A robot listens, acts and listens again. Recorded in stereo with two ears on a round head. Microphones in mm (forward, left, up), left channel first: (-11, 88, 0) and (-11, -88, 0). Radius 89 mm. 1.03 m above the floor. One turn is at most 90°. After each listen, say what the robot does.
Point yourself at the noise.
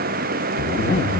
Turn 35° left.
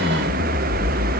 Found it: a zipper, straight ahead.